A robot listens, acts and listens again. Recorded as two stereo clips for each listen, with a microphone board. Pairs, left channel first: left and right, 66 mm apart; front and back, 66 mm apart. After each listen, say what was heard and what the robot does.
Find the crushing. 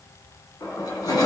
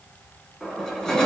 The crushing: 80° left. Turn 80° left.
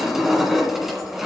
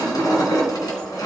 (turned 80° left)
Facing the crushing.